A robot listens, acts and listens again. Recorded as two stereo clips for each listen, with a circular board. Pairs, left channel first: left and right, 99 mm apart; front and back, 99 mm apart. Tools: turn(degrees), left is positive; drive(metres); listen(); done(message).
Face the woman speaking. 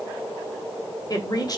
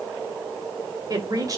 turn(degrees=135)
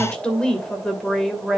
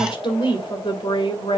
done("Facing the woman speaking.")